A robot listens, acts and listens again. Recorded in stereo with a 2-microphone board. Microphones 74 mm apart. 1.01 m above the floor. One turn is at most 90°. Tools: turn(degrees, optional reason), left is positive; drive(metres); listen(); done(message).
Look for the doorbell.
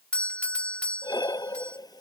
turn(degrees=30)
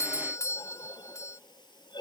turn(degrees=90, reason="So it is at 135° left.")
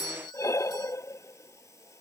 turn(degrees=90, reason="The doorbell is now 90° left.")
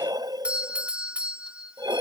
turn(degrees=-15, reason="The doorbell is now 15° right.")
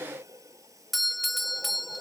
done("Found it: a doorbell, straight ahead.")